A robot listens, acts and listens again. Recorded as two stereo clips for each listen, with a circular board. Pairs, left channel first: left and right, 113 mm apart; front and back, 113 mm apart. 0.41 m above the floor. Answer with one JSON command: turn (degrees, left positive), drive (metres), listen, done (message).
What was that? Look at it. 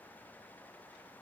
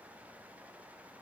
{"listen": true}
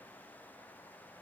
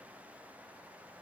{"listen": true}
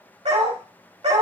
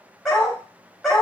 {"turn": -85}
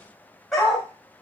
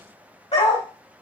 {"done": "Found it: a dog barking, straight ahead, 1 to 2 m away."}